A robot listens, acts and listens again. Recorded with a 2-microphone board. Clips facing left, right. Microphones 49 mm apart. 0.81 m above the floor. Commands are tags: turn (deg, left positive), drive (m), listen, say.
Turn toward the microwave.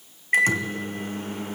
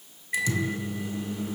<turn deg="50"/>
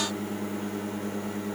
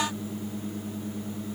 <turn deg="80"/>
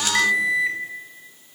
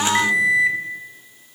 <say>Facing the microwave, 1 to 2 m away.</say>